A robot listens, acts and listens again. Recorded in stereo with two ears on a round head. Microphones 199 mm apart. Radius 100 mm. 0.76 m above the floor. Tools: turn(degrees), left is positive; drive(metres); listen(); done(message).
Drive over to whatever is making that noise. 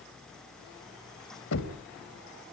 turn(degrees=90)
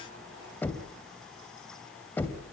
turn(degrees=10)
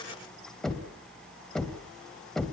drive(metres=1.0)
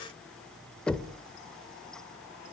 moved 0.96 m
drive(metres=1.0)
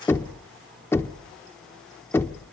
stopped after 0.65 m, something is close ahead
turn(degrees=10)
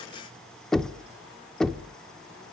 done("Arrived at the knocking, straight ahead.")